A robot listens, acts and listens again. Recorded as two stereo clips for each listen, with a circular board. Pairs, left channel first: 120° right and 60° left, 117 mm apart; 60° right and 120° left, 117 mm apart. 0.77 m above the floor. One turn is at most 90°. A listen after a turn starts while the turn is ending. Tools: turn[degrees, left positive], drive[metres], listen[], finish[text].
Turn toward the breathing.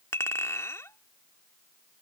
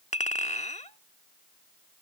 Action: listen[]
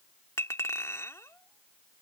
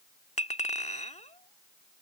Action: listen[]
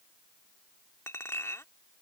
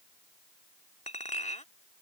Action: finish[I can't make out breathing, only a clink.]